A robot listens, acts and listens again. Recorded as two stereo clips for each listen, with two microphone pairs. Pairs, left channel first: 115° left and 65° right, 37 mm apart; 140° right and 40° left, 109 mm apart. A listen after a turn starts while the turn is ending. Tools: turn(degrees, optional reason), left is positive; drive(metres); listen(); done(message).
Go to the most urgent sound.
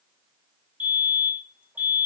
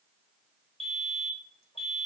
turn(degrees=-50, reason="The fire alarm: 50° right.")
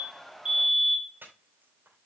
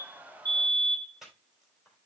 drive(metres=1.0)
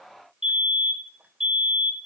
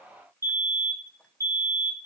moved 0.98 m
drive(metres=1.0)
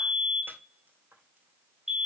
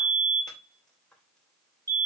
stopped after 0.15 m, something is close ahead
done("I am next to the fire alarm.")